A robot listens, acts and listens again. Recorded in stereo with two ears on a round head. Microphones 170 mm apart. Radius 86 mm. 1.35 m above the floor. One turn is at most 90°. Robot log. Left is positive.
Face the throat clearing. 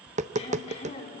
note: The throat clearing: about 35° left or 145° left.
cmd yaw +35
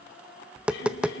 cmd idle
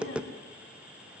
cmd idle
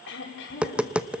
note: So it is at 110° left.
cmd yaw +90
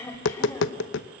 note: The throat clearing is now 10° left.
cmd yaw +10
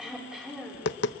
end: Facing the throat clearing, over 4 m away.